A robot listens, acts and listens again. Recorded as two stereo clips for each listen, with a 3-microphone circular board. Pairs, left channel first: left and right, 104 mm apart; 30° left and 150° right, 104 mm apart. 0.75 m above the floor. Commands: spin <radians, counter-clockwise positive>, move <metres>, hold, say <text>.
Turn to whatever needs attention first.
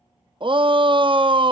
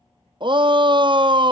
spin -2.01
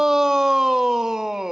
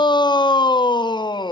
say Found it: a shout, straight ahead.